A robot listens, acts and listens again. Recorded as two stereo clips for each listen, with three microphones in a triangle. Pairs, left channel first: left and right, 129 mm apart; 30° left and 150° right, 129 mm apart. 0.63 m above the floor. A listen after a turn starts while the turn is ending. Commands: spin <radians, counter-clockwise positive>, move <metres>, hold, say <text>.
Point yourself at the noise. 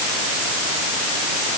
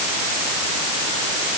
hold
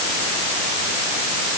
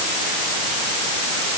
hold
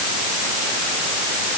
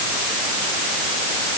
say I can't make out anything.